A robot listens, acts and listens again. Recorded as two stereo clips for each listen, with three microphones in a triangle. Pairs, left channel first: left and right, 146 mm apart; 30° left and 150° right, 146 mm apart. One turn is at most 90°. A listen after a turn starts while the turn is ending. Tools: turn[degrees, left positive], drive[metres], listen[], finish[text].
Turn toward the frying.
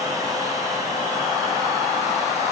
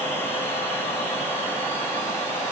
Action: listen[]
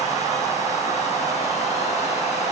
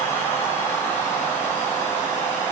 Action: listen[]
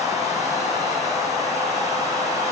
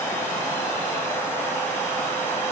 Action: finish[I can't make out frying.]